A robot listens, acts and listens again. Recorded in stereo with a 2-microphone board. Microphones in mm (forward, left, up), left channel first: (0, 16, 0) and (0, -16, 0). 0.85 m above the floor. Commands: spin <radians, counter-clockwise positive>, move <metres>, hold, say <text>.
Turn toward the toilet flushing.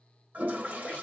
spin -0.96
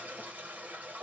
spin -0.96
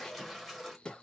say Found it: a toilet flushing, straight ahead.